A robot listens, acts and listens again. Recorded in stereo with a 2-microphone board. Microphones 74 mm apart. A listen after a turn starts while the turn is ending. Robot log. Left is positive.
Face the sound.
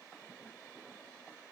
cmd idle
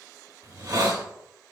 note: The hiss: about 55° right or 125° right.
cmd yaw -55
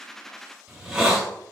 note: So it is at 10° right.
cmd yaw -10
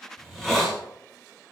end: Found it: a hiss, straight ahead.